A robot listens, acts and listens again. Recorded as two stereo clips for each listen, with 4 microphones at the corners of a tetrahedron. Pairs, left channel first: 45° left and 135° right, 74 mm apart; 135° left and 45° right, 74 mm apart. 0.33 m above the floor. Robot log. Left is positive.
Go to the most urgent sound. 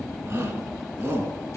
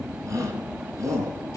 note: The shout: 80° right.
cmd yaw -80
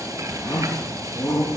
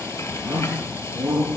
cmd fwd 1.0
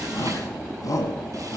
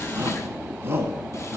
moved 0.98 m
note: The shout is now 10° left.
cmd yaw +10
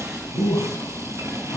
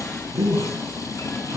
cmd fwd 1.0
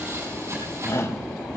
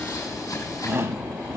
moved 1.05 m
cmd fwd 1.0
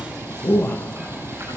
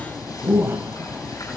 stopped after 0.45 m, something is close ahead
end: I am next to the shout.